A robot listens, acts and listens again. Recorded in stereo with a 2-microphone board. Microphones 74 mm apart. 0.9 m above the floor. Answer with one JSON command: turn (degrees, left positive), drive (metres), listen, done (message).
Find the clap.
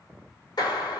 {"turn": 70}
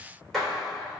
{"done": "Found it: a clap, straight ahead, 2 to 4 m away."}